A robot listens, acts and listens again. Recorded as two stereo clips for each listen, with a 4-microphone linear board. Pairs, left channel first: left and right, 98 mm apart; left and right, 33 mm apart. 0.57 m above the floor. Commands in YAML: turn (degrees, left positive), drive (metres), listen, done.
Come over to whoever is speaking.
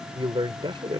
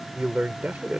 turn: -55
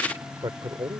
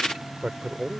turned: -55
turn: -55
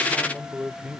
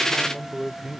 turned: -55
turn: -10
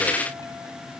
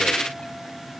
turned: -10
drive: 1.0
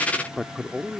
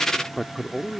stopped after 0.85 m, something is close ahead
done: "I am next to the man speaking."